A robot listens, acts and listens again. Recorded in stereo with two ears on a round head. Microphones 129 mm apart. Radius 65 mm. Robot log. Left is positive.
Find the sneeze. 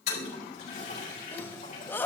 cmd yaw +30
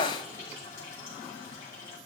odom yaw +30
note: So it is at 135° left.
cmd yaw +135
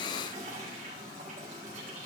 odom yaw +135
end: Facing where the sneeze came from. I can't hear it now.